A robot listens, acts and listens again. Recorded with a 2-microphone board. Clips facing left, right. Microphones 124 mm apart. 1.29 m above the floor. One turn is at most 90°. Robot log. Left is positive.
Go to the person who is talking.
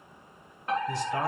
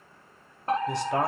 note: The man speaking: about 70° right or 110° right.
cmd yaw -70
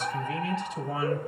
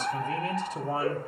note: So it is at 40° right.
cmd yaw -40
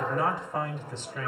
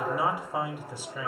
note: The man speaking is now 10° right.
cmd yaw -10
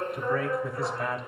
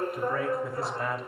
cmd fwd 1.0
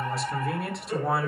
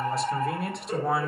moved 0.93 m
cmd fwd 1.0
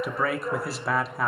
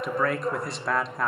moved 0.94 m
cmd fwd 1.0
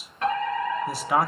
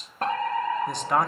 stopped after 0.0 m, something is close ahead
end: I am next to the man speaking.